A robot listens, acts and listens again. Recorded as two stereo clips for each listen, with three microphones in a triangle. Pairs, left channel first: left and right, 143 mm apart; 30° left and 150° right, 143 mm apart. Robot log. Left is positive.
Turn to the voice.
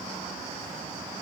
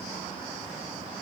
cmd idle
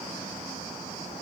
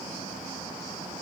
cmd idle
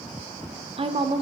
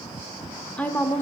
note: The woman speaking: 45° right.
cmd yaw -45
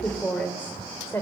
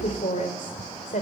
note: The woman speaking is now 20° left.
cmd yaw +20
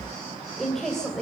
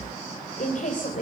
end: Found it: a woman speaking, straight ahead, 2 to 4 m away.